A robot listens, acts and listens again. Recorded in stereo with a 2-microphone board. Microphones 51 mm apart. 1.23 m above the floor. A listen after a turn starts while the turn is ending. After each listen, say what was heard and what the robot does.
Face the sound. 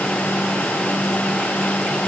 Keep listening.
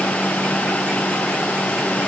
Keep listening.
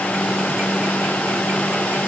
I can't make out anything.